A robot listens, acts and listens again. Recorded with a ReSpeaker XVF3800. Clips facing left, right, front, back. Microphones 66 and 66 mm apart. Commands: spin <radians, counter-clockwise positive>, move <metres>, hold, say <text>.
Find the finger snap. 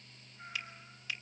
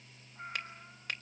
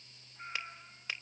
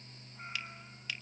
spin -0.96
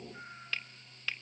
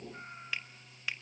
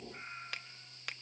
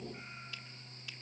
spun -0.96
spin -0.26
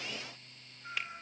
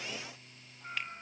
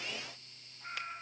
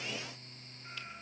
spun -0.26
hold
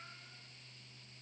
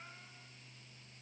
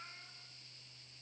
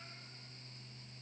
hold
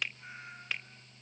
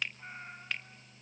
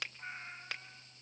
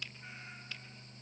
say Facing the finger snap.